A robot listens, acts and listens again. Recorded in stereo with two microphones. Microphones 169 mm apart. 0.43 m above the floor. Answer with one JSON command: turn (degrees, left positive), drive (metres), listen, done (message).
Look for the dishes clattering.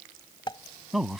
{"turn": 30}
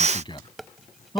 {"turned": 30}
{"done": "Facing the dishes clattering."}